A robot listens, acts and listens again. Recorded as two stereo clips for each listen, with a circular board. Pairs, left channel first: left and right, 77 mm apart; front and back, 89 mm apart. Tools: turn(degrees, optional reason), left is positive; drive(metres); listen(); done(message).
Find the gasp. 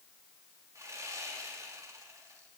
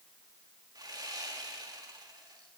listen()
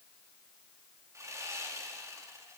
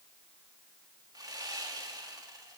listen()
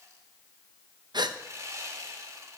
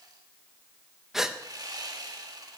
turn(degrees=-95, reason="The gasp: 95° right.")
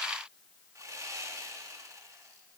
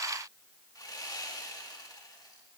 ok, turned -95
done("I heard a gasp from this way, but can't make it out now.")